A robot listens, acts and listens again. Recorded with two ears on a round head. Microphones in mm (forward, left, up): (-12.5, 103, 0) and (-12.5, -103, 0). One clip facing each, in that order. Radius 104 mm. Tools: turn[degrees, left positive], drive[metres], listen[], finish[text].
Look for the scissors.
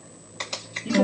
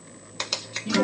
Thought: The scissors: about 55° right or 125° right.
Action: turn[-55]
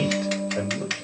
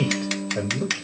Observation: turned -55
Thought: So it is at 65° right.
Action: turn[-65]
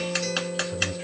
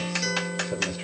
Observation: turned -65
Action: finish[Facing the scissors, 1 to 2 m away.]